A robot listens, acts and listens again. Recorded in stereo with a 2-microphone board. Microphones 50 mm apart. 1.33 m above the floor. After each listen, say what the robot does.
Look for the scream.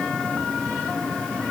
Keep listening.
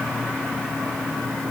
Keep listening.
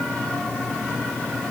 I can't make out a scream.